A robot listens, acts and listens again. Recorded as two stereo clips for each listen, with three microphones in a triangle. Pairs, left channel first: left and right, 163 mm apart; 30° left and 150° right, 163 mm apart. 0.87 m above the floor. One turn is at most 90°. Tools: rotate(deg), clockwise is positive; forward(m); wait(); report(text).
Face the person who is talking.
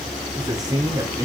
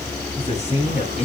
rotate(20)
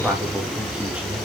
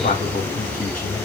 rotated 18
report("Found it: a man speaking, straight ahead.")